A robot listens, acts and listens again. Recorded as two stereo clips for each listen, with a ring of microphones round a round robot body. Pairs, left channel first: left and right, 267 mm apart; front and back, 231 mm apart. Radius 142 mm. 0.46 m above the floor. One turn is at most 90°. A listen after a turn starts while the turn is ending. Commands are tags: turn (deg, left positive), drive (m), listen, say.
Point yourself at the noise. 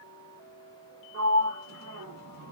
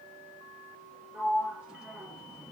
<turn deg="-90"/>
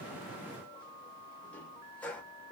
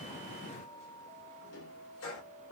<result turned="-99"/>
<say>Found it: a sliding door, straight ahead, 1 to 2 m away.</say>